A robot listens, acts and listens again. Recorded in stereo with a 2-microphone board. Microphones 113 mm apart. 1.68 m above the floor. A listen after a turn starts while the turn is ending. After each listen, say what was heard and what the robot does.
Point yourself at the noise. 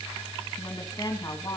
The woman speaking: about 30° left or 150° left. Turn 30° left.
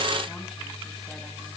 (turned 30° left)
Keep listening.
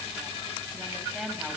Facing the woman speaking.